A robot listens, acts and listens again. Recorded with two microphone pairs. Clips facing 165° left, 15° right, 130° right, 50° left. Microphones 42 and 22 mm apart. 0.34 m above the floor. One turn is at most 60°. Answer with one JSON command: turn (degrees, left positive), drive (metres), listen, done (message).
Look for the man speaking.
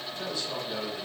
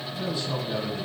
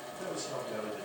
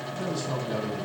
{"turn": 60}
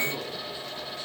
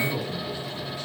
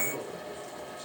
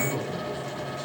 {"turn": 20}
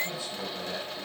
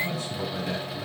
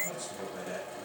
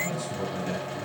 {"done": "Found it: a man speaking, straight ahead, 2 to 4 m away."}